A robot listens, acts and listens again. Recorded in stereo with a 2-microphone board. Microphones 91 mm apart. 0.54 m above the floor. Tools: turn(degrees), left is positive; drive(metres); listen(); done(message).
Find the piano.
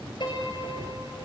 turn(degrees=60)
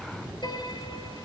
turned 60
turn(degrees=60)
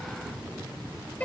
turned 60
turn(degrees=20)
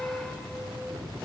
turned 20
done("Found it: a piano, straight ahead.")